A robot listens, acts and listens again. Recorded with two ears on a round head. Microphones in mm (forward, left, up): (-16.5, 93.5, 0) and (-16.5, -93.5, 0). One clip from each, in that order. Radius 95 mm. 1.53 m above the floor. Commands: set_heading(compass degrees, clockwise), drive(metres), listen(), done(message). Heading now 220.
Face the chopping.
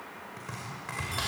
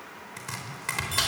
set_heading(285)
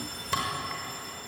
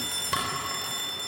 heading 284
done("Found it: chopping, straight ahead.")